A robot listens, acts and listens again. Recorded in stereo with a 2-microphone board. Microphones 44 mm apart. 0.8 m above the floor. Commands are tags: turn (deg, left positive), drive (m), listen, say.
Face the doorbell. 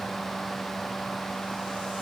<listen/>
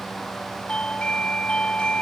<turn deg="25"/>
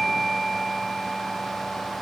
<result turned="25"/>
<say>Found it: a doorbell, straight ahead.</say>